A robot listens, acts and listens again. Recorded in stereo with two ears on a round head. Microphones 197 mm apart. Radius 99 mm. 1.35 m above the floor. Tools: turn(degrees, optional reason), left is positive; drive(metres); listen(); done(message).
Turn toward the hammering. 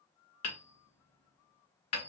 turn(degrees=90)
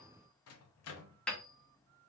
done("Facing the hammering.")